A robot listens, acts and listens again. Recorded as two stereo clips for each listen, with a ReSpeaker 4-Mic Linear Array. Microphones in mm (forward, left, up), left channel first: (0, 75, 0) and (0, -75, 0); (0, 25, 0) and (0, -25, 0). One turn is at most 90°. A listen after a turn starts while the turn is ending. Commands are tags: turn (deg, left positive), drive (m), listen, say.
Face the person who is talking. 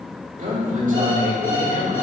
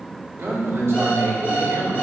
<turn deg="-60"/>
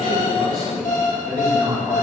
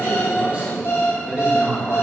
<turn deg="-30"/>
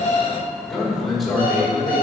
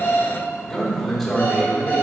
<say>Found it: a man speaking, straight ahead, 2 to 4 m away.</say>